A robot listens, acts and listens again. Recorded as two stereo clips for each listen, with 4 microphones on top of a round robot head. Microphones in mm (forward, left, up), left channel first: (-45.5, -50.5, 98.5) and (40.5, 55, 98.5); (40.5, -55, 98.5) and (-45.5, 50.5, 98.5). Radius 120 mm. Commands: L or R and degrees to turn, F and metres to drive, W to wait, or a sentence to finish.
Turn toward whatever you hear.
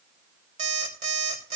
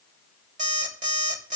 L95
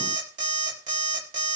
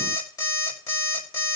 L15
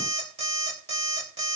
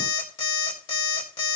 Facing the alarm clock, 2 to 4 m away.